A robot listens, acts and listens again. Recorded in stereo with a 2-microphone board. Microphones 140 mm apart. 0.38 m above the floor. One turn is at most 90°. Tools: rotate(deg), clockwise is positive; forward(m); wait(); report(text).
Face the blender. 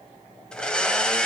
rotate(-30)
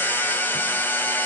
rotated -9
rotate(-30)
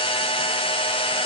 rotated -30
rotate(-90)
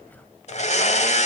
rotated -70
rotate(-65)
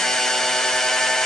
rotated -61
report("Found it: a blender, straight ahead.")